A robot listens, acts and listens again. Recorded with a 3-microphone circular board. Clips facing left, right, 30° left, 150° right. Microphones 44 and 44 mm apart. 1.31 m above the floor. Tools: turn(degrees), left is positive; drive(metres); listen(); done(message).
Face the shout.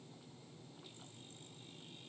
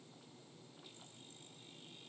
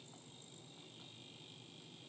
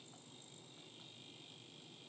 listen()
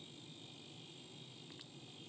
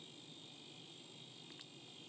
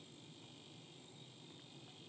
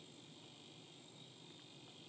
listen()
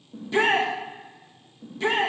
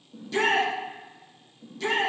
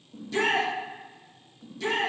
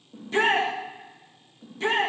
turn(degrees=155)
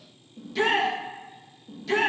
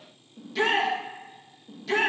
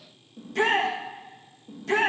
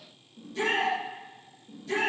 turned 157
done("Found it: a shout, straight ahead, 1 to 2 m away.")